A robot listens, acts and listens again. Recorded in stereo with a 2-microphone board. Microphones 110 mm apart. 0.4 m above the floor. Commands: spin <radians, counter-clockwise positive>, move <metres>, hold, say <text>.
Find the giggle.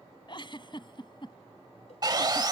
spin 0.79
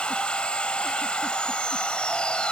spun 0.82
hold
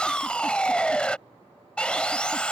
hold
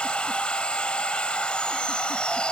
say I heard a giggle, but can't make it out now. It was about straight ahead or 90° left.